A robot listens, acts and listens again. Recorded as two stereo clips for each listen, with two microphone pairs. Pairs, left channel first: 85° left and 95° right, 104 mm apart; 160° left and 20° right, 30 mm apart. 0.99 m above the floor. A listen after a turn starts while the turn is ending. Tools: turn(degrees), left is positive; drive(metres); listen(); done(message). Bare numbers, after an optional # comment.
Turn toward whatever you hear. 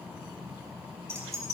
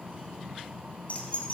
# The keys jangling: 150° right.
turn(-150)
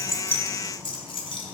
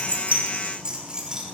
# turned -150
# The keys jangling is now 50° left.
turn(50)
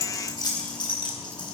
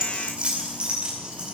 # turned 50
# The keys jangling is now 45° left.
turn(45)
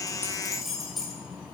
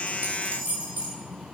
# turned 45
done("Found it: keys jangling, straight ahead.")